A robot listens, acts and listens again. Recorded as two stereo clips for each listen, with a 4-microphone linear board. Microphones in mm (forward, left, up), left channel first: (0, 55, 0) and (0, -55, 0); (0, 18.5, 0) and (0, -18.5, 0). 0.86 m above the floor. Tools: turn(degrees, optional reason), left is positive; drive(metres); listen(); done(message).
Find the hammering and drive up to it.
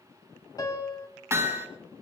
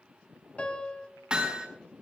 turn(degrees=-25, reason="The hammering: about 25° right or 155° right.")
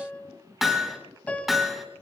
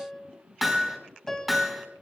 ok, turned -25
drive(metres=1.0)
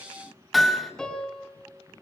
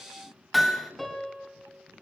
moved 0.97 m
drive(metres=1.0)
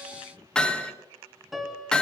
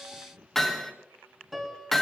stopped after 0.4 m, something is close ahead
done("Something is in my way. I am facing the hammering but have not reached it.")